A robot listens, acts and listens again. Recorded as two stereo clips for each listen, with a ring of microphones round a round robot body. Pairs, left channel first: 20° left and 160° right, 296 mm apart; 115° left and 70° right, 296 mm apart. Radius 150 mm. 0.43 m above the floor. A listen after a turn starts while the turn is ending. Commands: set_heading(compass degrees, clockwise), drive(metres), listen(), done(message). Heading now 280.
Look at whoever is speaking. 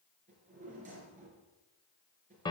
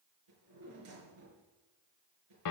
listen()
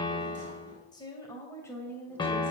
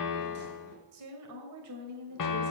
set_heading(340)
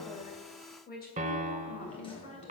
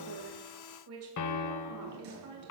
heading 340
set_heading(25)
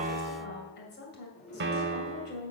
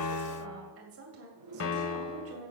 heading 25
set_heading(55)
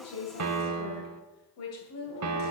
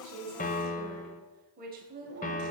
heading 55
set_heading(65)
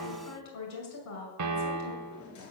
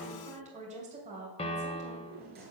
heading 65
done("Facing the woman speaking, 2 to 4 m away.")